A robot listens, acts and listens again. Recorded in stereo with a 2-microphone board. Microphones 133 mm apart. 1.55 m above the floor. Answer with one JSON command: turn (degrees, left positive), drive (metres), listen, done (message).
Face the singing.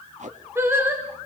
{"turn": -15}
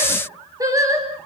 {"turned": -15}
{"turn": -25}
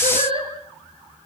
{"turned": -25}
{"turn": -140}
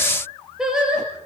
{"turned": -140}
{"done": "Found it: singing, straight ahead, over 4 m away."}